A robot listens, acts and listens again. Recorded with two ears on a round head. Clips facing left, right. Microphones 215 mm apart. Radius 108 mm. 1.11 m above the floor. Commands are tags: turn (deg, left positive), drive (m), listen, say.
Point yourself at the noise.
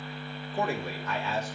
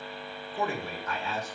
<turn deg="55"/>
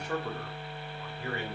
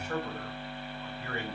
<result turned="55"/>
<turn deg="65"/>
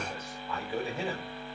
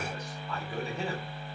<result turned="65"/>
<say>Found it: a man speaking, straight ahead, over 4 m away.</say>